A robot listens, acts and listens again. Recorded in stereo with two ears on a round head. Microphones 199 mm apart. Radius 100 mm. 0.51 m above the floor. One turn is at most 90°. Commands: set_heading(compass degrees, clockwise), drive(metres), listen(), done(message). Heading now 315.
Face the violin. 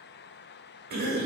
listen()
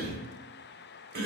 listen()
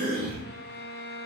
set_heading(270)
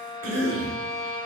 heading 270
set_heading(260)
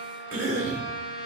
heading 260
done("Facing the violin, 1 to 2 m away.")